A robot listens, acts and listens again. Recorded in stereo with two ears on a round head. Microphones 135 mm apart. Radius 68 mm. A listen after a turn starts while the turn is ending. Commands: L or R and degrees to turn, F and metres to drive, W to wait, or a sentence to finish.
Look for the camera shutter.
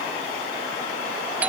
W
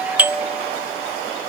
W
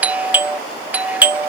I can't make out a camera shutter to turn to.